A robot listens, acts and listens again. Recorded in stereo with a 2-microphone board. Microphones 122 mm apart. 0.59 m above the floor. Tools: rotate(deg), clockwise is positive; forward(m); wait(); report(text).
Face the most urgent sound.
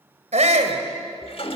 rotate(65)
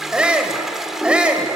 rotate(10)
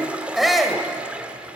report("Facing the shout.")